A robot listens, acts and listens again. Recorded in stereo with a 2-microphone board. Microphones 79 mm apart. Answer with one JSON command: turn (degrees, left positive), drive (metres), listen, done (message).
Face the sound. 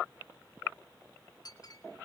{"turn": 55}
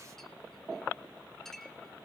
{"done": "Facing the clink."}